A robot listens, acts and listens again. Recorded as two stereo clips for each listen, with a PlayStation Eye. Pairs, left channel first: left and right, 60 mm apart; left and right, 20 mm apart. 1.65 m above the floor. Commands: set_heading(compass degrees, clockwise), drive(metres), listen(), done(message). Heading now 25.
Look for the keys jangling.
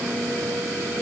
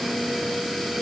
listen()
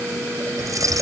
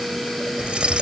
set_heading(90)
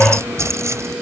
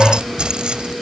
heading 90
set_heading(140)
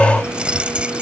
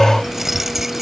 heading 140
set_heading(155)
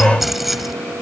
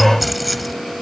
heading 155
done("Facing the keys jangling.")